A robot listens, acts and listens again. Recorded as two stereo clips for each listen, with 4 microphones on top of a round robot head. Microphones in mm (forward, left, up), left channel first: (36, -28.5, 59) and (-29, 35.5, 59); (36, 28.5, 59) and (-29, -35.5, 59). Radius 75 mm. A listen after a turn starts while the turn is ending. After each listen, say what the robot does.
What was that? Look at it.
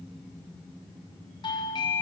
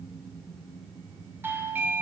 Turn 70° right.
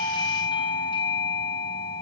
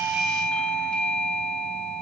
Turn 35° right.
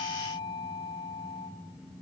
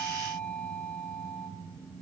Turn 25° right.
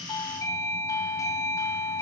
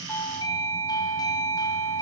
Found it: a doorbell, straight ahead.